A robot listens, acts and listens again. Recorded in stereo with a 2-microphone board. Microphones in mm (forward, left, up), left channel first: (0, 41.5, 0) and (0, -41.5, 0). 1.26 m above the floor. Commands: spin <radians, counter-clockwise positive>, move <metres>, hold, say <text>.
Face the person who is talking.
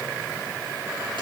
hold
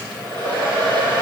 hold
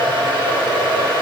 say I can't make out anyone speaking to turn to.